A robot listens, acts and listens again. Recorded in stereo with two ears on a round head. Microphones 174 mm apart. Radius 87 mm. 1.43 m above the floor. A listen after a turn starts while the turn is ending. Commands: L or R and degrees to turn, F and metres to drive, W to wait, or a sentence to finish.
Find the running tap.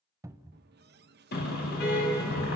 R55
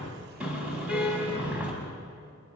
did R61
W
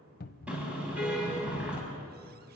W
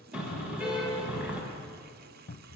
R55
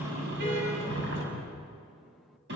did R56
W
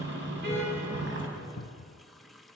Found it: a running tap, straight ahead.